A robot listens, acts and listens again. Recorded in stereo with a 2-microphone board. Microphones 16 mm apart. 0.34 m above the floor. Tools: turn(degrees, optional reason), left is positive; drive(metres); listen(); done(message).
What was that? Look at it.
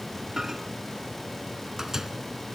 turn(degrees=-30, reason="The microwave: about 30° right or 150° right.")
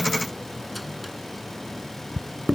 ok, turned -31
done("Facing the microwave.")